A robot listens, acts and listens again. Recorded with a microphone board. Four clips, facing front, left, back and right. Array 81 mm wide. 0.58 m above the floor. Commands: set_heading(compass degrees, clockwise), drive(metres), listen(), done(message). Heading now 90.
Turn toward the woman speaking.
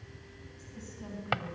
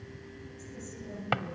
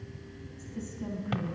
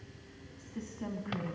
set_heading(180)
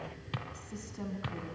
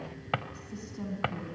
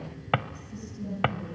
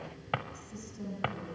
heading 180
set_heading(145)
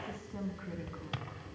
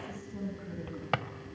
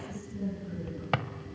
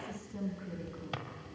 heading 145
done("Found it: a woman speaking, straight ahead.")